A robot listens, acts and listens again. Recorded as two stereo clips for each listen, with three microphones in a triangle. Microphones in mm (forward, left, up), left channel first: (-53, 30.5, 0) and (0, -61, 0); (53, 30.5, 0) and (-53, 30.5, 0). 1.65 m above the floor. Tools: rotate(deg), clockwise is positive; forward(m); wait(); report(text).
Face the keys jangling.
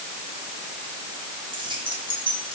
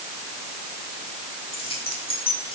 rotate(25)
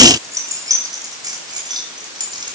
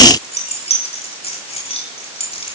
rotate(15)
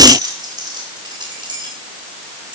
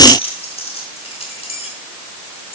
rotate(15)
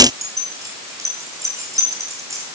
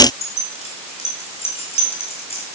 report("Facing the keys jangling, over 4 m away.")